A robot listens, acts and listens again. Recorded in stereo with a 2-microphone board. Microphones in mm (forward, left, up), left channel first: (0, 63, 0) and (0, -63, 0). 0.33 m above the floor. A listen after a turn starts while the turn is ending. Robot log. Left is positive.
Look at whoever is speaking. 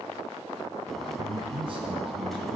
note: The man speaking: about 45° right or 135° right.
cmd yaw -45
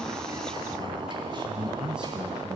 note: So it is at 10° right.
cmd yaw -10
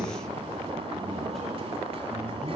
cmd idle
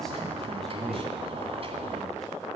end: Found it: a man speaking, straight ahead.